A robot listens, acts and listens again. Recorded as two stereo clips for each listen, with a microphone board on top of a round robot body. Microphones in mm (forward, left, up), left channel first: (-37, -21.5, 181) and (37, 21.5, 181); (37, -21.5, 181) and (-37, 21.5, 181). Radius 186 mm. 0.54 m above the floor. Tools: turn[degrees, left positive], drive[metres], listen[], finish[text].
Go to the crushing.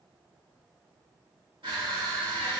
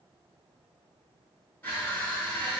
Thought: The crushing: 35° left.
Action: turn[35]
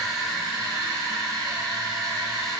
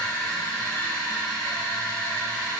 Thought: The crushing is now 15° left.
Action: turn[15]
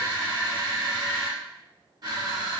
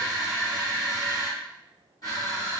Action: drive[1.0]
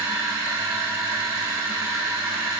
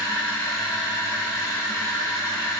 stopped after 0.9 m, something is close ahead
Action: finish[Arrived at the crushing, straight ahead.]